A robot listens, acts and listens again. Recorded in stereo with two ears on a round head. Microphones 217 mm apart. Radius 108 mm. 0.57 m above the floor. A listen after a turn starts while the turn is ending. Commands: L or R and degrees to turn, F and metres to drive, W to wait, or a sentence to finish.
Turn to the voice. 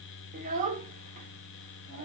R35
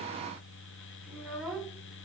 Facing the child speaking, under 1 m away.